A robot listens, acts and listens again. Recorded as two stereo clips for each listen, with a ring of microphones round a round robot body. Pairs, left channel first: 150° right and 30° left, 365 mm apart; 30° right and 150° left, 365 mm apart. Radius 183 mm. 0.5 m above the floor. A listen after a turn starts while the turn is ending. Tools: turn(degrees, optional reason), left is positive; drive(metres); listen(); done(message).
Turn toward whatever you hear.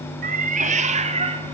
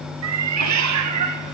turn(degrees=105, reason="The cat meowing: 105° left.")
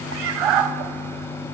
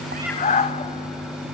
turn(degrees=45, reason="The cat meowing is now 45° left.")
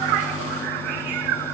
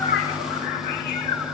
turn(degrees=25, reason="The cat meowing is now 25° left.")
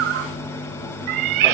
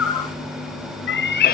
turn(degrees=35, reason="The cat meowing is now 35° left.")
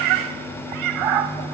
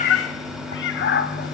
turn(degrees=30, reason="The cat meowing is now 30° left.")
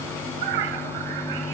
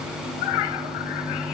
done("Facing the cat meowing, 1 to 2 m away.")